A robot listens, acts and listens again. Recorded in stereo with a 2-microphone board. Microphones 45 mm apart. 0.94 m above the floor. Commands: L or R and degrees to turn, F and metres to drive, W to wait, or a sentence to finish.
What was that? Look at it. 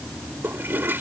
R55
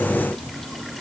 W
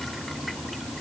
W
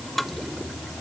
Facing the toilet flushing.